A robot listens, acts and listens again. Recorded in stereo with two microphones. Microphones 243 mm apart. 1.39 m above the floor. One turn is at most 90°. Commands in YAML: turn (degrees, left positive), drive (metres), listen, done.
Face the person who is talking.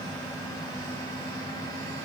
listen: true
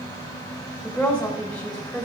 turn: 30
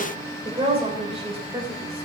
turn: -25
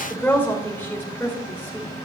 turn: 10
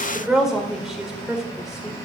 done: "Facing the woman speaking."